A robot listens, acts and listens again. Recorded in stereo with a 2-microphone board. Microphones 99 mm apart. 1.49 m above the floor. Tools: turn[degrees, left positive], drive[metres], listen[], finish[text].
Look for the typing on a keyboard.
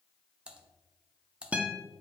Action: turn[-30]
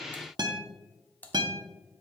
Thought: So it is at 20° left.
Action: turn[20]
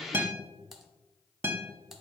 Action: finish[Found it: typing on a keyboard, straight ahead.]